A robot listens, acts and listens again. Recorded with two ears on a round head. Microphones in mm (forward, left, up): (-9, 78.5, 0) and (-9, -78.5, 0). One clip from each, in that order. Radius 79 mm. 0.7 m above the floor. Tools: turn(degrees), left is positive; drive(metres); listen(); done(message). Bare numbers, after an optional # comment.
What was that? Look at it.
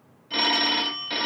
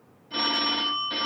# The phone ringing: about 60° left or 120° left.
turn(60)
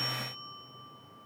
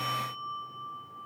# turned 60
listen()
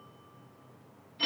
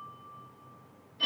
# So it is at 50° left.
turn(50)
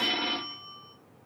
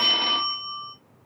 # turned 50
# The phone ringing is now 15° right.
turn(-15)
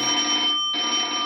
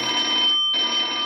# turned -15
done("Facing the phone ringing, under 1 m away.")